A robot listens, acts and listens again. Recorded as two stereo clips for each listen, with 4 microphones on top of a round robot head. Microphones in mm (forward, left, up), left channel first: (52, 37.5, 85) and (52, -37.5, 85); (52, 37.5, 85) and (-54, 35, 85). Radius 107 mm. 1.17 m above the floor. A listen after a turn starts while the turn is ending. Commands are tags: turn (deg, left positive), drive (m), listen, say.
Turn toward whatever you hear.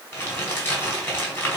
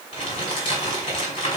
<turn deg="35"/>
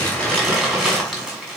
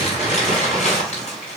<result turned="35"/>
<say>Found it: crumpling, straight ahead, 1 to 2 m away.</say>